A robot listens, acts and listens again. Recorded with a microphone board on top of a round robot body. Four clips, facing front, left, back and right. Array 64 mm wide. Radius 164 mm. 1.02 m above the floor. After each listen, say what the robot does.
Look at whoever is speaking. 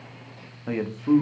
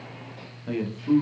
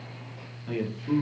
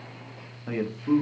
Turn 20° right.
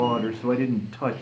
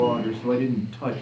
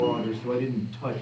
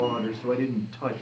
Turn 10° right.
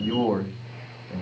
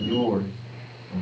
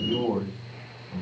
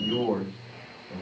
Facing the man speaking, 1 to 2 m away.